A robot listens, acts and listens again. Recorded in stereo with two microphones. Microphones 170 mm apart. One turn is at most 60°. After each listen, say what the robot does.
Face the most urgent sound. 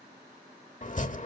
Keep listening.
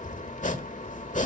Keep listening.
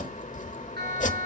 Turn 60° right.
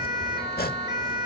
Turn 25° right.
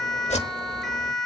Facing the siren.